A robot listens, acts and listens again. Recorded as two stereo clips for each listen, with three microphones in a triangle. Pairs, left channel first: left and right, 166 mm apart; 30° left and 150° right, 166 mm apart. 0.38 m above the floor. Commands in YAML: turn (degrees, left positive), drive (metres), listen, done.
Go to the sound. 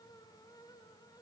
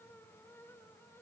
listen: true
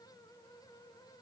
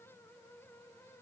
listen: true
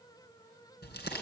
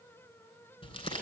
turn: 85
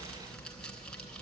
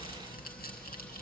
drive: 1.0
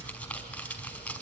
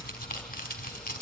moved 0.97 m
turn: 10
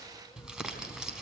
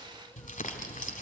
drive: 1.0
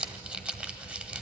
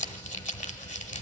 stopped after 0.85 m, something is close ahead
turn: -10
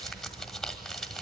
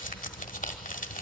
done: "Arrived at the crumpling, straight ahead."